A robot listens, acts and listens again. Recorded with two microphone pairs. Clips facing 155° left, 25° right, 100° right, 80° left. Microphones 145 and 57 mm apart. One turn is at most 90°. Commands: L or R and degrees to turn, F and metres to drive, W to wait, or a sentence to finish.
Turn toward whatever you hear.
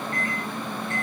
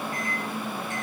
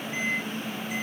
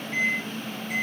L50
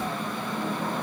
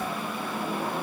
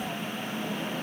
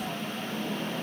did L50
W
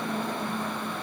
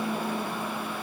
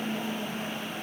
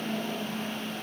W
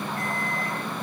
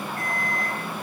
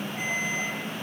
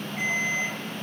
L15
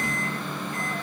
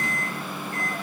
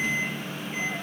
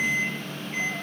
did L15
Found it: a microwave, straight ahead.